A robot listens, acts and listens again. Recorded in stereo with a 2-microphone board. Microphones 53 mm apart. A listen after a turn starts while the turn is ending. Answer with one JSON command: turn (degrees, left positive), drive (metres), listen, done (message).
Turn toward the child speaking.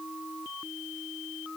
{"listen": true}
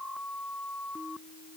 {"listen": true}
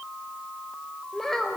{"turn": 30}
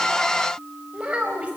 {"turn": -25}
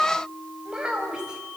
{"turn": -20}
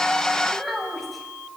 {"done": "Facing the child speaking, over 4 m away."}